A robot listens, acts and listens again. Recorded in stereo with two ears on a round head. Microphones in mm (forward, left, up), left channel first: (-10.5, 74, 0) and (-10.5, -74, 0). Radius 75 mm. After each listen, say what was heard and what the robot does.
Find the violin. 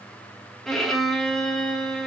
Turn 30° left.
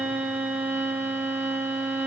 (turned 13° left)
So it is at 10° right. Turn 10° right.
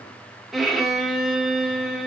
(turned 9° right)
Found it: a violin, straight ahead, 1 to 2 m away.